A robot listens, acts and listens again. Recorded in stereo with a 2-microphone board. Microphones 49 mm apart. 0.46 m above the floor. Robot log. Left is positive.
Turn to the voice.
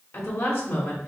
note: The woman speaking: about 60° left or 120° left.
cmd yaw +60
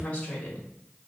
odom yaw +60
note: So it is at 30° left.
cmd yaw +30
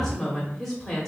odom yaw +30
note: The woman speaking is now 10° left.
cmd yaw +10
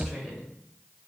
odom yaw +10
end: Facing the woman speaking, 1 to 2 m away.